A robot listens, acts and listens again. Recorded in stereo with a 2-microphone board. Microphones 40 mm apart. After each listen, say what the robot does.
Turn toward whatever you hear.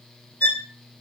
Turn 50° left.
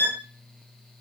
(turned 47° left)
Turn 75° left.
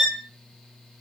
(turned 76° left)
Found it: a violin, straight ahead.